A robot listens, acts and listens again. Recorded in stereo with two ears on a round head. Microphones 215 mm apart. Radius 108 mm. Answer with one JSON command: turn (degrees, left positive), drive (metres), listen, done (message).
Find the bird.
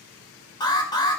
{"listen": true}
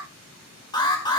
{"listen": true}
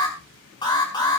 {"done": "I can't make out a bird to turn to."}